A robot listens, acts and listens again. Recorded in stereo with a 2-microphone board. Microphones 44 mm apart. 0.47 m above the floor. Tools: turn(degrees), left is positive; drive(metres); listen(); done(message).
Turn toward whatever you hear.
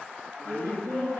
turn(degrees=60)
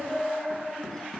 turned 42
turn(degrees=15)
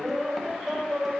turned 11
done("Facing the laughter, 2 to 4 m away.")